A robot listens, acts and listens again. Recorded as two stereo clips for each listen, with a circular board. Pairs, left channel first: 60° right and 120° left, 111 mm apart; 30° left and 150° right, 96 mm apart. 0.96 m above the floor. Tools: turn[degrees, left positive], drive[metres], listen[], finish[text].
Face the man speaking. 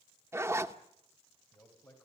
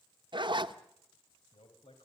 Thought: The man speaking: 10° left.
Action: turn[10]
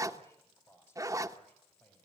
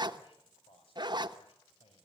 Thought: The man speaking is now 15° left.
Action: turn[15]
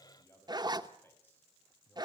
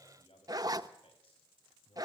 Thought: The man speaking is now 15° left.
Action: turn[15]
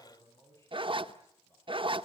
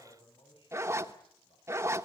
Action: finish[Found it: a man speaking, straight ahead, over 4 m away.]